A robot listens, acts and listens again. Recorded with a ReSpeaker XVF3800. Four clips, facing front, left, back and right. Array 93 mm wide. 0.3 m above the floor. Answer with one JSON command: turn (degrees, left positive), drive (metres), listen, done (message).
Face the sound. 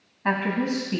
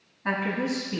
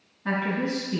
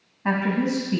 {"turn": -35}
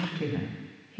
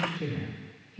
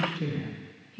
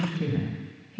{"turn": -35}
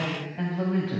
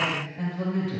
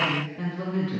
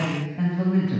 {"turn": -30}
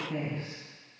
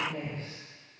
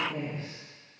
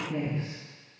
{"turn": -20}
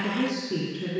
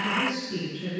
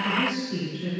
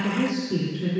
{"turn": -10}
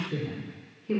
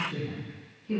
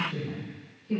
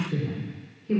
{"done": "Facing the woman speaking, 2 to 4 m away."}